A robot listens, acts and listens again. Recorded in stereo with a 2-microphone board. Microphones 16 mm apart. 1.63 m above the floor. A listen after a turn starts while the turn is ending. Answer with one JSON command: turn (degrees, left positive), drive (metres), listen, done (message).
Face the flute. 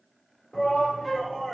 {"turn": 30}
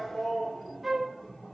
{"turn": -25}
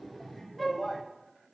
{"turn": 15}
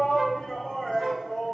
{"done": "Found it: a flute, straight ahead."}